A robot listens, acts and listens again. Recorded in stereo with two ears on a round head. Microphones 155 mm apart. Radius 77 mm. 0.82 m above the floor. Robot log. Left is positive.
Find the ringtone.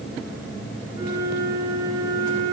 cmd idle
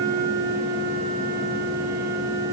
cmd idle
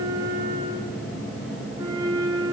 end: I can't make out a ringtone to turn to.